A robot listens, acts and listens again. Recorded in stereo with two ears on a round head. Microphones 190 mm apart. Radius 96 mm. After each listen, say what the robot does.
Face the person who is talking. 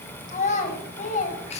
Turn 35° left.
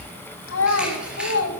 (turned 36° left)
Turn 105° left.
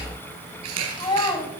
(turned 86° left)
Turn 20° left.
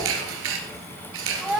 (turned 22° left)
Facing the child speaking.